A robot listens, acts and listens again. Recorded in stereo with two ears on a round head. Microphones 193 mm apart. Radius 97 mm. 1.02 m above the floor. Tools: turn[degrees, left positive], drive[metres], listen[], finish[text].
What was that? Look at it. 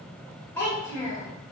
Thought: The child speaking: about 20° left or 160° left.
Action: turn[20]
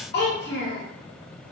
Thought: So it is at 120° left.
Action: turn[120]
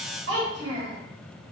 Thought: The child speaking is now 70° right.
Action: turn[-70]
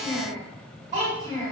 Thought: The child speaking is now 20° right.
Action: turn[-20]
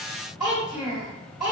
Action: finish[Facing the child speaking, 1 to 2 m away.]